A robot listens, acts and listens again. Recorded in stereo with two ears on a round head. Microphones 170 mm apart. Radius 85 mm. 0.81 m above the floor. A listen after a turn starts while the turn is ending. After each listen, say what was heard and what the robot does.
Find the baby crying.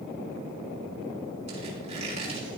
Keep listening.
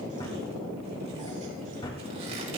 Keep listening.
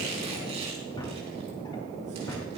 I can't make out a baby crying to turn to.